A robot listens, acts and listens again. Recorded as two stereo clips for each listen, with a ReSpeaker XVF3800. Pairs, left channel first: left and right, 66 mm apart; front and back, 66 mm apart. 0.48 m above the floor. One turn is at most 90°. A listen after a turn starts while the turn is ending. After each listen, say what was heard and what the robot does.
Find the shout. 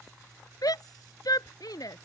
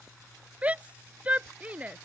The shout: 110° left. Turn 90° left.
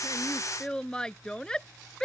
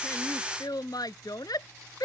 The shout is now 10° left. Turn 10° left.
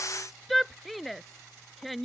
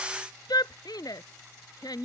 Facing the shout.